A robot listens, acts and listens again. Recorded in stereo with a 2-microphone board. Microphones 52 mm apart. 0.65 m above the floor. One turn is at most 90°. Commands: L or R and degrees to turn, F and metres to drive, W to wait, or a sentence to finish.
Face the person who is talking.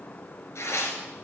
W
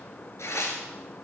W
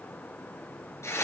I can't make out anyone speaking, only tearing paper.